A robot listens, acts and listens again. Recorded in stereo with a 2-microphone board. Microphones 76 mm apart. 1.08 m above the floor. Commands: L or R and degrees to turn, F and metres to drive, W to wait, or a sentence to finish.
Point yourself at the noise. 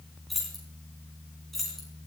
L30
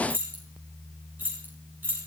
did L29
R25
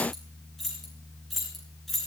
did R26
Facing the keys jangling.